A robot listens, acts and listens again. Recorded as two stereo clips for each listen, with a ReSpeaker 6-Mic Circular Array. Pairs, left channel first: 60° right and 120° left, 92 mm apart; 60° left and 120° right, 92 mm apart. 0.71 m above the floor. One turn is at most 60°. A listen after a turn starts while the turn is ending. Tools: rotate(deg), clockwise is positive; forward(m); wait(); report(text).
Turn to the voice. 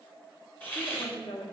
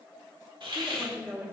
rotate(55)
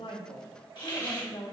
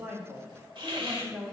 rotate(35)
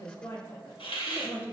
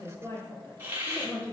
rotate(10)
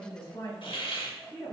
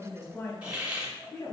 report("Facing the woman speaking.")